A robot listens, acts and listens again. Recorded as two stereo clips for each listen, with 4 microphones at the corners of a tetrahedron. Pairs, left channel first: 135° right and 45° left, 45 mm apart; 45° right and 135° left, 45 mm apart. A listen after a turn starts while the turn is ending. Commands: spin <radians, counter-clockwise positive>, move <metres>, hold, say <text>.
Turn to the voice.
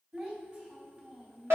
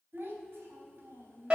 spin 1.75
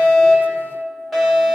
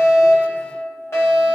hold
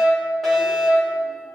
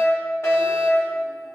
hold
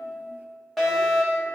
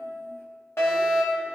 say I heard a child speaking from this way, but can't make it out now.